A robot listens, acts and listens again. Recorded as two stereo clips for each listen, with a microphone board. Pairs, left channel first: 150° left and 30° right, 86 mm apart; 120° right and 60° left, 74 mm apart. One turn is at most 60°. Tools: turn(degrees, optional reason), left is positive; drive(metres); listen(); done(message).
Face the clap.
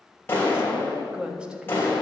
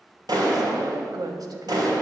turn(degrees=60, reason="The clap: 85° left.")
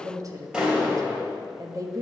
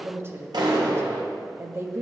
turn(degrees=50, reason="The clap is now 50° left.")
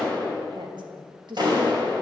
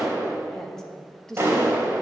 done("Found it: a clap, straight ahead, 2 to 4 m away.")